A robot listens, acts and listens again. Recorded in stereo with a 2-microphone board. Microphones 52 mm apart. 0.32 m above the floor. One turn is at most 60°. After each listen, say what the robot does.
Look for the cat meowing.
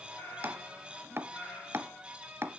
Turn 45° left.
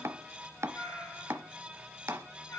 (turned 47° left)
Turn 60° left.
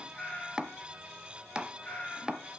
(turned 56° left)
Turn 20° left.
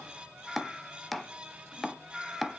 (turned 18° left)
Found it: a cat meowing, straight ahead.